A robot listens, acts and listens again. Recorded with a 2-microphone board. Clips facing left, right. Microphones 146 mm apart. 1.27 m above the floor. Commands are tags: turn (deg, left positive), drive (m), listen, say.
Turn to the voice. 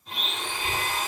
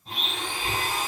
<turn deg="30"/>
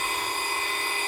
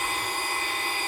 <turn deg="-25"/>
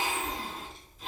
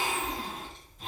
<say>Facing the child speaking.</say>